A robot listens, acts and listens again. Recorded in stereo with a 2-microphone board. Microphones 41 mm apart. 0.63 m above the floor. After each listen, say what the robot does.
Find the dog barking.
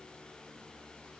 Keep listening.
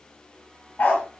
Turn 45° left.
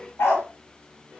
Turn 90° left.
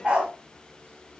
Turn 25° right.
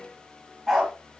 Facing the dog barking.